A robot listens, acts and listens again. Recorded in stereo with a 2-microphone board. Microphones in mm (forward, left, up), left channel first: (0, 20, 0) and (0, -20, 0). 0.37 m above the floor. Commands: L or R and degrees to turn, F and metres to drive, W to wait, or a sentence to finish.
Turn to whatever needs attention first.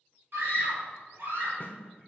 R65
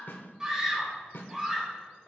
R20
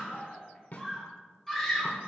Found it: a scream, straight ahead, 1 to 2 m away.